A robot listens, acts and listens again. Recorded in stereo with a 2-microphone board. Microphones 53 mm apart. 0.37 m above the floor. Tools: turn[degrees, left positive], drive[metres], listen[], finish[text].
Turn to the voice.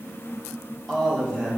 Thought: The man speaking: about 20° left or 160° left.
Action: turn[20]
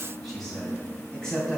Thought: The man speaking: about 15° left or 165° left.
Action: turn[15]
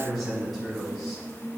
Action: turn[30]
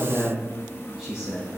Thought: So it is at 10° right.
Action: turn[-10]
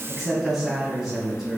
Action: finish[Found it: a man speaking, straight ahead.]